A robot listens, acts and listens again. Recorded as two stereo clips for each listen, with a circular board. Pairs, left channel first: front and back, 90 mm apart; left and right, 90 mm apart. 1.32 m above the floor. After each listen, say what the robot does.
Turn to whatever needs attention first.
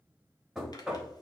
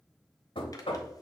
Keep listening.
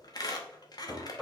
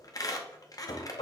Keep listening.
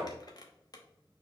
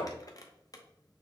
I can't make out anything urgent, only a squeak and knocking.